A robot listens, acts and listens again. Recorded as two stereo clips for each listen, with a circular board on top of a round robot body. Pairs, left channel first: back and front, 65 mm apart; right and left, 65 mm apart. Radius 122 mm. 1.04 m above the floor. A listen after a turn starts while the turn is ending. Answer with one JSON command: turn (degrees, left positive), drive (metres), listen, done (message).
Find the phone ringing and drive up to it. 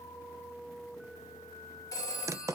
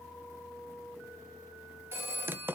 {"turn": 145}
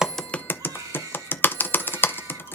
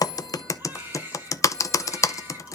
{"listen": true}
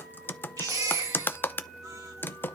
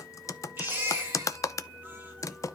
{"listen": true}
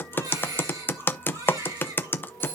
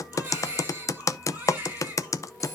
{"done": "I heard a phone ringing from this way, but can't make it out now. I did not reach it."}